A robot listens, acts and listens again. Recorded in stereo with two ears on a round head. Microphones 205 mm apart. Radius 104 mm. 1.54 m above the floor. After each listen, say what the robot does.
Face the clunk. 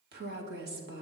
Keep listening.
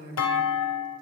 Turn 70° left.
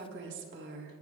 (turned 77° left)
Keep listening.
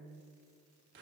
I heard a clunk, but can't make it out now. It was about 10° right or 35° left.